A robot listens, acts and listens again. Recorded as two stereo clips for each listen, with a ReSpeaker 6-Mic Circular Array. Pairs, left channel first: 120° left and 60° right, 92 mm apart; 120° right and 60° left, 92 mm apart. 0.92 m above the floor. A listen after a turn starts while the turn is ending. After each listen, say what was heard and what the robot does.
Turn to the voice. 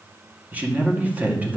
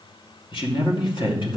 The man speaking: 130° right. Turn 130° right.
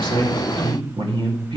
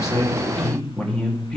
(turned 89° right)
The man speaking is now 40° right. Turn 40° right.
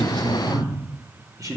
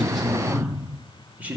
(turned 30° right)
The man speaking is now 10° right. Turn 10° right.
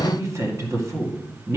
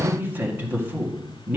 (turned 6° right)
Facing the man speaking.